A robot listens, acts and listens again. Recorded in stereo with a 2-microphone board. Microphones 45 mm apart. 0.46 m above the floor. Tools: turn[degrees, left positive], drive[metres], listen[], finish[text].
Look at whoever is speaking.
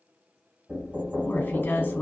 Thought: The woman speaking: about 50° left or 130° left.
Action: turn[50]
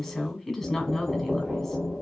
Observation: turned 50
Thought: So it is at 15° left.
Action: turn[15]
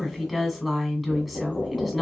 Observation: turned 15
Action: finish[Found it: a woman speaking, straight ahead.]